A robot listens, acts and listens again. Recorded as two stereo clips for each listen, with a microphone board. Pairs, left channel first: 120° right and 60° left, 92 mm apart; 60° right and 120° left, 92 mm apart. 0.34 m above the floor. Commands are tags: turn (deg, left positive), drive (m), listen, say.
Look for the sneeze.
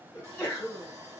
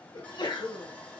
<turn deg="-55"/>
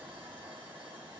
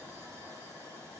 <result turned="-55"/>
<say>I heard a sneeze from this way, but can't make it out now.</say>